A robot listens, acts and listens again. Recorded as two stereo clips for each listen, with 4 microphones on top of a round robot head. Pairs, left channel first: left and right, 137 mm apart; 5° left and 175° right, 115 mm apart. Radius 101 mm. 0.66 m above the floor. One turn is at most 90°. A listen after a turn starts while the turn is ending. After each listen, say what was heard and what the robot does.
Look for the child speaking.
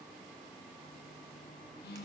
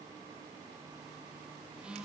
Keep listening.
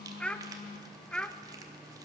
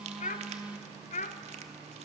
Facing the child speaking.